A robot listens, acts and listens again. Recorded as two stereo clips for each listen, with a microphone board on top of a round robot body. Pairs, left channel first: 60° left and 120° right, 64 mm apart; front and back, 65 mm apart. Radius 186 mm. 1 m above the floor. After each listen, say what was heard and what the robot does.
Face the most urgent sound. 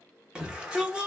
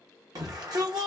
The shout: 165° left. Turn 165° left.
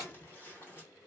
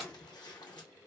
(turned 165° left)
Keep listening.
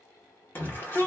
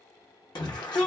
Facing the shout, under 1 m away.